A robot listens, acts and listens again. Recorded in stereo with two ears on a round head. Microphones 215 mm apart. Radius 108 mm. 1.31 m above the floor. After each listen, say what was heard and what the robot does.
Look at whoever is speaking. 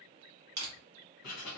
Keep listening.
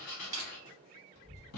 The child speaking: about 30° left or 150° left. Turn 30° left.
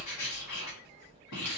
So it is at 120° left. Turn 120° left.
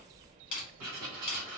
The child speaking is now 20° right. Turn 20° right.
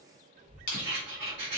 Facing the child speaking, 1 to 2 m away.